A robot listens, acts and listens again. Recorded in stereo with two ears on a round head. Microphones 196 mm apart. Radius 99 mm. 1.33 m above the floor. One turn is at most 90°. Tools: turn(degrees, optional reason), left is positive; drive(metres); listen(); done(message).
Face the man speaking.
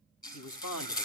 turn(degrees=90)
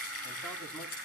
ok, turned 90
listen()
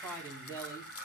turn(degrees=15, reason="The man speaking is now 15° left.")
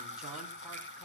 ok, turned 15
listen()
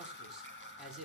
done("Facing the man speaking, over 4 m away.")